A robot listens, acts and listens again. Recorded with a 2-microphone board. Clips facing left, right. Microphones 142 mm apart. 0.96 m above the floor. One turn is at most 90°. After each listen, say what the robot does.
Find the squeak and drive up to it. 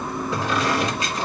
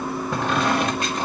Turn 55° right.
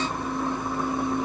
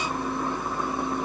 Keep listening.
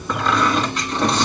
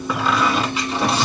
Drive 1.0 m forward.
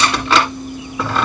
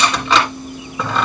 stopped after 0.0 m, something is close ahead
Blocked. The squeak is further on, straight ahead.